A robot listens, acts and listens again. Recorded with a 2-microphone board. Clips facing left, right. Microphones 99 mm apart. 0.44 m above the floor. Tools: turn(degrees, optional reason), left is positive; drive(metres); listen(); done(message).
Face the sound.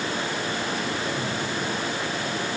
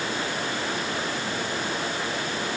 listen()
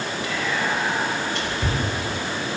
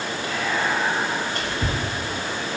turn(degrees=-45, reason="The whispering: about 45° right or 135° right.")
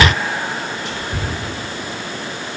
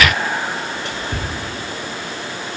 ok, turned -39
turn(degrees=-90, reason="So it is at 90° right.")
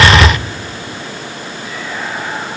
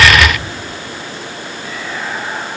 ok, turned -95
listen()
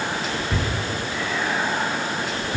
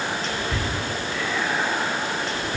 done("Found it: whispering, straight ahead.")